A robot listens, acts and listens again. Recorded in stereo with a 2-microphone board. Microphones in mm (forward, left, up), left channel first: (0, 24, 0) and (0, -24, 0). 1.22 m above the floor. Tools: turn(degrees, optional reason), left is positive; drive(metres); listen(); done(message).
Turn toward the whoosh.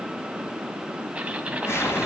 turn(degrees=65, reason="The whoosh: about 65° left or 115° left.")
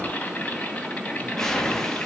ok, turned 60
done("Facing the whoosh, 2 to 4 m away.")